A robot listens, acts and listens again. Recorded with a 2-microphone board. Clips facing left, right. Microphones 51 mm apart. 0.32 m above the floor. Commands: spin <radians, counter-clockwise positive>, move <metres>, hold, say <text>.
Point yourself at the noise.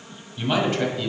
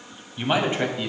spin -0.26
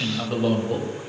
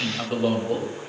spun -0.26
spin -0.52
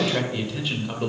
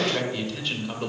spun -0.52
spin 0.52
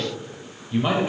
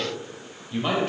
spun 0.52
spin 0.52
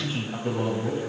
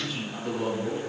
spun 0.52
spin 2.62
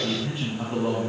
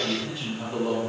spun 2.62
spin 0.52
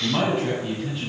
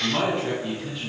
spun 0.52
spin 0.17
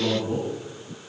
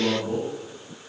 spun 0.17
say Found it: a man speaking, straight ahead.